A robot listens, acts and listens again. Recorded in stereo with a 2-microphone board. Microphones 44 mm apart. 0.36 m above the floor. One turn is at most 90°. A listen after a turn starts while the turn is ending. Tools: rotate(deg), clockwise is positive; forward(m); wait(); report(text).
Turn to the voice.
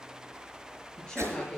rotate(-15)
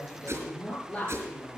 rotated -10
rotate(-25)
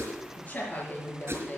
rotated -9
rotate(-90)
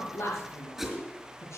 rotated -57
rotate(-90)
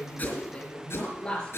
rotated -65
rotate(-20)
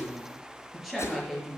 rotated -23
report("Facing the woman speaking.")